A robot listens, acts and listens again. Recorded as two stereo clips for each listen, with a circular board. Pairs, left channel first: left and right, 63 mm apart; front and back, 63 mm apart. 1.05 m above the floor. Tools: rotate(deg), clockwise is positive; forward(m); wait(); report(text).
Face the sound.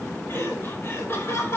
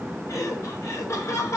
rotate(-45)
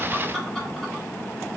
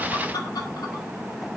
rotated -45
wait()
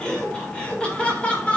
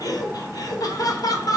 rotate(-20)
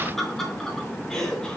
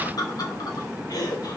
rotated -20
rotate(-15)
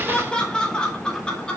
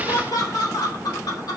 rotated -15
rotate(-15)
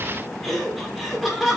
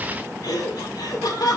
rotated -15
report("Found it: laughter, straight ahead.")